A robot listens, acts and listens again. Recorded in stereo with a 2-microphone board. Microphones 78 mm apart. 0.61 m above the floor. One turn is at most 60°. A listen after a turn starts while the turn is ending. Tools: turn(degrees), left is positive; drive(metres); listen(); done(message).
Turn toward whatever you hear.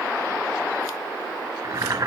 turn(degrees=-50)
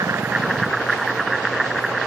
done("Found it: boiling, straight ahead.")